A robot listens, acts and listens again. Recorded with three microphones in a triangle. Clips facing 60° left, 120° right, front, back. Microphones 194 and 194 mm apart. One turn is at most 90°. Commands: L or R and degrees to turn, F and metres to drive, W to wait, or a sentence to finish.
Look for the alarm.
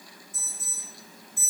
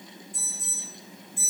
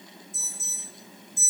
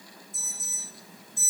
L90
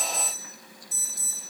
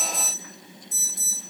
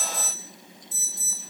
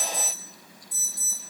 L65
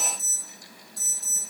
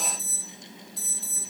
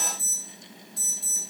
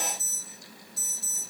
L25
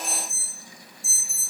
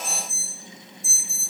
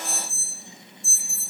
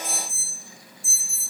Found it: an alarm, straight ahead.